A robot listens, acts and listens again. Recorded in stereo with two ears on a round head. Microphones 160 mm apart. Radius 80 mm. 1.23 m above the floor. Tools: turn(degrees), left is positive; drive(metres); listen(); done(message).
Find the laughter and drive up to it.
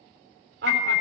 turn(degrees=-65)
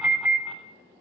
listen()
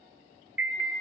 listen()
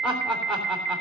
drive(metres=1.0)
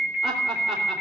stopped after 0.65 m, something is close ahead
done("Blocked. The laughter is further on, straight ahead.")